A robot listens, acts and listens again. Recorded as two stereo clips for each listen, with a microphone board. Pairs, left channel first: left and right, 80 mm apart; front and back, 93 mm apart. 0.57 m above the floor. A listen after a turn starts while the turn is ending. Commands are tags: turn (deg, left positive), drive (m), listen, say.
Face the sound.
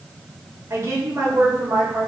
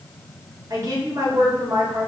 <turn deg="-140"/>
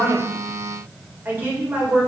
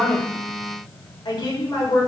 <turn deg="-30"/>
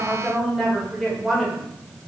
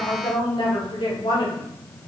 <say>Facing the woman speaking, 1 to 2 m away.</say>